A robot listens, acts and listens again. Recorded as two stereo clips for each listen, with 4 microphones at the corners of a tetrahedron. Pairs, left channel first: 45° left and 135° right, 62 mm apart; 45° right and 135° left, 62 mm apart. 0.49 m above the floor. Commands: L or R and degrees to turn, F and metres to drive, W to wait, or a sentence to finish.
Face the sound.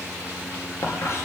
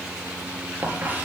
L80
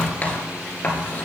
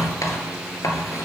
R20
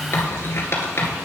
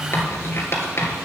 Facing the writing, 1 to 2 m away.